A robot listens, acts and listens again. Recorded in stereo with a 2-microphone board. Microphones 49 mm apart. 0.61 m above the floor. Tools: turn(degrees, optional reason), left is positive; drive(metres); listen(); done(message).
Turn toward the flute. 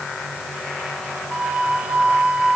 turn(degrees=-25, reason="The flute: about 25° right or 155° right.")
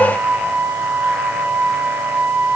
turn(degrees=-130, reason="So it is at 130° right.")
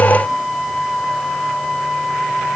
done("Facing the flute.")